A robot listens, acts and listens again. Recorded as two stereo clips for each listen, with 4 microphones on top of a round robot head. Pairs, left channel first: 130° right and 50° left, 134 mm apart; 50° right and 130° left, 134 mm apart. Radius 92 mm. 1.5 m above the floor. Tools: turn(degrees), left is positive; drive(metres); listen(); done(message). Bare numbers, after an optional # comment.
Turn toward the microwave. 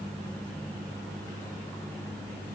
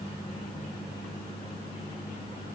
listen()
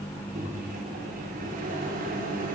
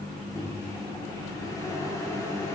# The microwave: 20° left.
turn(20)
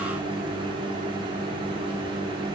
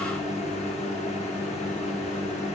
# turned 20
done("Facing the microwave, over 4 m away.")